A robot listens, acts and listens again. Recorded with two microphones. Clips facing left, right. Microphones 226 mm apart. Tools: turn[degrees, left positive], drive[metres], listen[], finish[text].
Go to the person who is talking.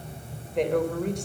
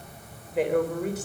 Action: turn[-30]
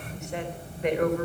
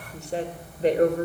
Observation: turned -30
Thought: So it is at 145° right.
Action: turn[-145]
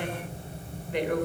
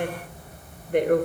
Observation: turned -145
Thought: The woman speaking is now 50° right.
Action: turn[-50]
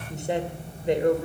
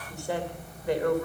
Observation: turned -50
Thought: The woman speaking is now 20° left.
Action: turn[20]
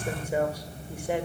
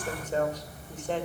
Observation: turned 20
Thought: The woman speaking is now 10° left.
Action: turn[10]
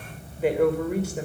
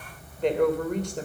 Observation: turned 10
Action: drive[1.0]
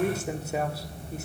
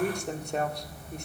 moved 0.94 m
Action: drive[1.0]
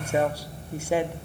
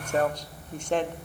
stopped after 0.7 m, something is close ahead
Thought: The woman speaking is now 10° left.
Action: turn[10]
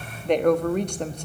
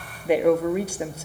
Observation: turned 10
Action: finish[I am next to the woman speaking.]